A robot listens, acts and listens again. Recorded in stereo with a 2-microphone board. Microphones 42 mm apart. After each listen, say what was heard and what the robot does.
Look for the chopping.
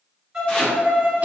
The chopping: about 20° left or 160° left. Turn 20° left.
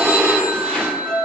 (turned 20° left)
Facing the chopping, 2 to 4 m away.